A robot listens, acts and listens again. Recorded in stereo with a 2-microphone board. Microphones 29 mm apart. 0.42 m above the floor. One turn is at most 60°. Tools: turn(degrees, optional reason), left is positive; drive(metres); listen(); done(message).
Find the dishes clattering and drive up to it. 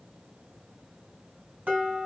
turn(degrees=-60, reason="The dishes clattering: about 65° right or 115° right.")
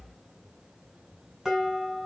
turn(degrees=-10, reason="So it is at 10° right.")
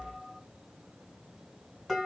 drive(metres=1.0)
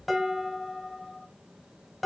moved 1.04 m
drive(metres=1.0)
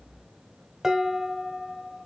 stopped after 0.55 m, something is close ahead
turn(degrees=-15, reason="The dishes clattering is now 15° right.")
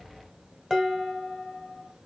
done("I am next to the dishes clattering.")